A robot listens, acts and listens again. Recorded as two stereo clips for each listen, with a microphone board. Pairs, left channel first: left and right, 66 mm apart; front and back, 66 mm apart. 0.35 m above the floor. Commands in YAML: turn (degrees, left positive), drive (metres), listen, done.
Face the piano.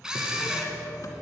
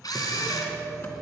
turn: 165
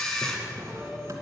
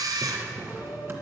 turn: -10
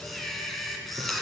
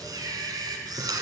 listen: true
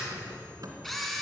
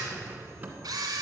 listen: true
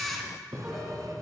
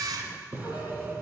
done: "Found it: a piano, straight ahead."